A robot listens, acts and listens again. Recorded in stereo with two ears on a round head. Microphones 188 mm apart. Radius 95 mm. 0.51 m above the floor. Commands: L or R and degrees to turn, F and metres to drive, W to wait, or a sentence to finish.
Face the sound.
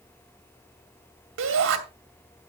R65
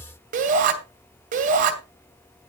R40
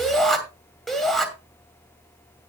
Facing the shout, 2 to 4 m away.